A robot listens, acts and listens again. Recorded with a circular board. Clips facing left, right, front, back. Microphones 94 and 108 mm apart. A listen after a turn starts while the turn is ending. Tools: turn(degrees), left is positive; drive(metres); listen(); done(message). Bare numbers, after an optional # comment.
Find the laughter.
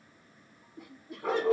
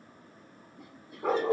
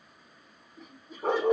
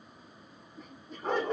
# The laughter: 85° left.
turn(85)
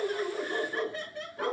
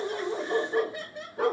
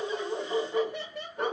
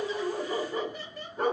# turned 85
# The laughter is now 20° right.
turn(-20)
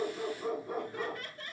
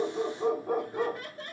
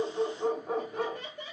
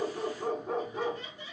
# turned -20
# The laughter is now 35° right.
turn(-35)
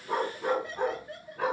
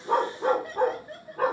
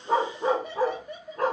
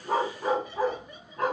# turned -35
# The laughter is now 20° right.
turn(-20)
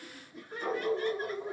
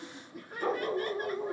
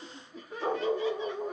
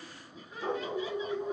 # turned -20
# The laughter is now 10° right.
turn(-10)
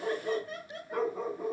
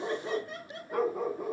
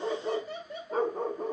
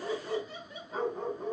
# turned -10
done("Found it: laughter, straight ahead, 1 to 2 m away.")